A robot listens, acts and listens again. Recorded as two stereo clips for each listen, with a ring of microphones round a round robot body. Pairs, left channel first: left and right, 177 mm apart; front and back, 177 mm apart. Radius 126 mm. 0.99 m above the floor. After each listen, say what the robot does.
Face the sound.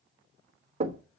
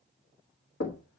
Turn 35° right.
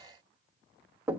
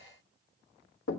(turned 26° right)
Turn 10° right.
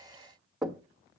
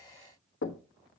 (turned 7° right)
Found it: knocking, straight ahead, 1 to 2 m away.